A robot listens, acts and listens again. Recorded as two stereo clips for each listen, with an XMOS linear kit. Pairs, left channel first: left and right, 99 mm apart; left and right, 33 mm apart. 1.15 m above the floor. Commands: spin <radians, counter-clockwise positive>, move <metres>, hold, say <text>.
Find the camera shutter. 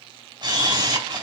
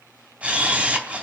spin -0.87
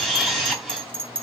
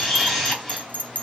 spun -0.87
say Facing the camera shutter.